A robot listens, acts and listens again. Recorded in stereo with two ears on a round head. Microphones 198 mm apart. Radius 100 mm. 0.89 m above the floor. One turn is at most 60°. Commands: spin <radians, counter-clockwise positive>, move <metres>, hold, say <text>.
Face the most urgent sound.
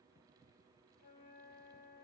hold
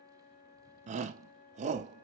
spin -0.61
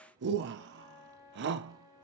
spin -1.05
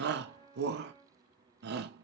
spin -1.05
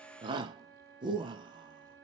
spin -0.44
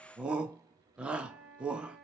say Facing the shout.